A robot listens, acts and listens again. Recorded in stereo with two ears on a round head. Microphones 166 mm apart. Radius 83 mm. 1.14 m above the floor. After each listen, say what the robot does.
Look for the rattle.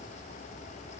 Keep listening.
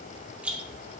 Turn 30° right.
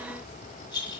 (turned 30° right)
Turn 25° left.
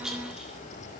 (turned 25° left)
Found it: a rattle, straight ahead, 1 to 2 m away.